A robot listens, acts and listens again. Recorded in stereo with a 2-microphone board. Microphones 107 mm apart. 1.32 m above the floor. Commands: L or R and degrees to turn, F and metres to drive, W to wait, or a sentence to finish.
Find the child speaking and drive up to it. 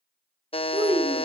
R65
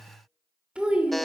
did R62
R10
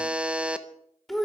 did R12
F1.0
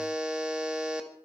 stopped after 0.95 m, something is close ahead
W
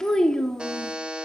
L10
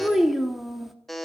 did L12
I am next to the child speaking.